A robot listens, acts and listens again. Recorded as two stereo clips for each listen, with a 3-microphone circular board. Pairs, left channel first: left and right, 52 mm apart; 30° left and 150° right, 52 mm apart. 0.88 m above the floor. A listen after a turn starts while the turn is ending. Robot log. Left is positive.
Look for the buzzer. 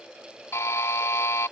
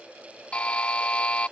note: The buzzer: 90° left.
cmd yaw +90
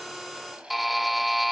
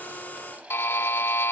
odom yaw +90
end: Found it: a buzzer, straight ahead.